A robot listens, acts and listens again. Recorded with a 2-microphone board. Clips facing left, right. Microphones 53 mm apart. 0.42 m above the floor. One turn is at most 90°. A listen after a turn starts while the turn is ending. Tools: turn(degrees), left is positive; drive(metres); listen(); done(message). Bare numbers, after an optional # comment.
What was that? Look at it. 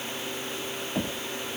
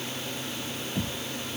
# The knocking: about 50° left or 130° left.
turn(50)
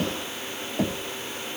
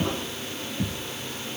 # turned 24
# So it is at 105° left.
turn(90)
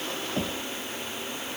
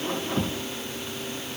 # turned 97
# Nothing new. It was at 10° left.
turn(10)
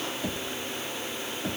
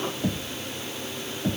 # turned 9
done("Found it: knocking, straight ahead.")